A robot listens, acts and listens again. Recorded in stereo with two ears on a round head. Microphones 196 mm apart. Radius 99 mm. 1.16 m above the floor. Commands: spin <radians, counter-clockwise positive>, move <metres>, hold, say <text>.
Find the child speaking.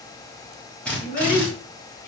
spin 0.79
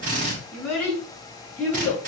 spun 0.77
spin 0.17
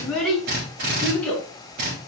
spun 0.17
say Facing the child speaking.